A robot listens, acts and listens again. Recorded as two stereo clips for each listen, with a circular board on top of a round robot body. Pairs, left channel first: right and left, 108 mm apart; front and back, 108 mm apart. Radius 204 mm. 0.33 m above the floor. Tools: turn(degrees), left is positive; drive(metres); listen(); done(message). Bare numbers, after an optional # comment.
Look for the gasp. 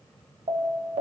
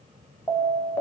listen()
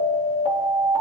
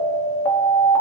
listen()
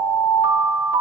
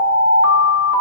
done("I can't make out a gasp to turn to.")